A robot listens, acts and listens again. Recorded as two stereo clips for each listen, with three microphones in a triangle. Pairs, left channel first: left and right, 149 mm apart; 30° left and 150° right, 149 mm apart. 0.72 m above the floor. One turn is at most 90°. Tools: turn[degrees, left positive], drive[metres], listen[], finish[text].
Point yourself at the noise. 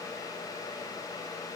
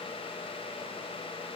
Action: listen[]
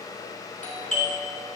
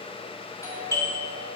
Thought: The doorbell: 95° left.
Action: turn[90]
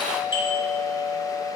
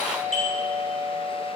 Thought: The doorbell is now 40° left.
Action: turn[40]
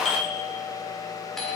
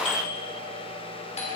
Action: finish[Found it: a doorbell, straight ahead.]